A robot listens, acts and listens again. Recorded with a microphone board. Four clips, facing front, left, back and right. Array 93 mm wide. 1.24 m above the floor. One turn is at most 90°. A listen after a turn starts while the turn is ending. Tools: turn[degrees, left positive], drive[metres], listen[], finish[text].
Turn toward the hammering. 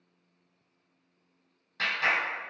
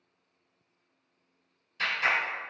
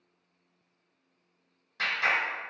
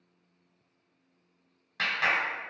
Action: listen[]
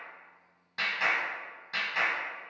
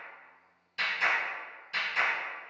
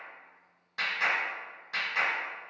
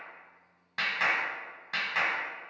Action: listen[]
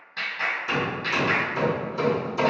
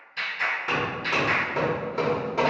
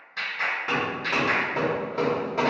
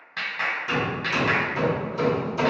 Thought: The hammering: 135° left.
Action: turn[90]
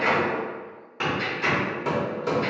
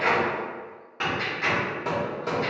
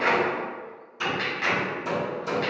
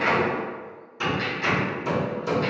Thought: The hammering is now 40° left.
Action: turn[40]
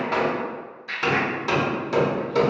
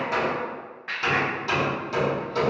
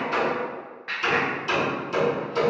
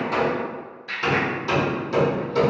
Action: finish[Facing the hammering.]